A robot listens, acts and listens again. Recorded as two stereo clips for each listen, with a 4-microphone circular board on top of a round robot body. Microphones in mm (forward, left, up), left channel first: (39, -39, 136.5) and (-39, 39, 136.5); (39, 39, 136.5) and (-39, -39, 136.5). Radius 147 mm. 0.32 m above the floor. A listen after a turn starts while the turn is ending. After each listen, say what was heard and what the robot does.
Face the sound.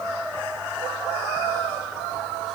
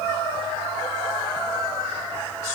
Keep listening.
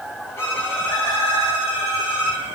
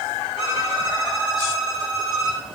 The violin: 110° right. Turn 110° right.
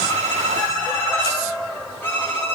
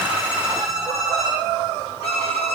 The violin is now 25° left. Turn 25° left.
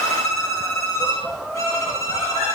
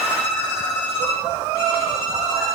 The violin is now 15° left. Turn 15° left.
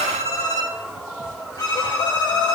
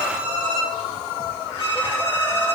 Found it: a violin, straight ahead.